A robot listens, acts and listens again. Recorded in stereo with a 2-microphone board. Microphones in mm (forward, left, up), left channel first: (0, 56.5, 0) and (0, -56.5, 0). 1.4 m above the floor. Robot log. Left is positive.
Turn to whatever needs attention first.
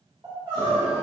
note: The crying: about 40° right or 140° right.
cmd yaw -40
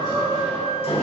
note: So it is at 100° right.
cmd yaw -100
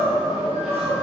end: Facing the crying.